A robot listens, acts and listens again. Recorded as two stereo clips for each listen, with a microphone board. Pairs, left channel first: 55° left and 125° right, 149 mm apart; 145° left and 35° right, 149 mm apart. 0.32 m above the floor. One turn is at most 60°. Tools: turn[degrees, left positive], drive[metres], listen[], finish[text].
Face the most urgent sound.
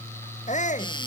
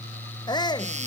Thought: The shout: 85° left.
Action: turn[60]
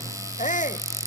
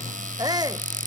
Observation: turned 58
Thought: The shout is now 30° left.
Action: turn[30]
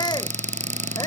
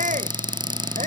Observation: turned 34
Action: finish[Facing the shout.]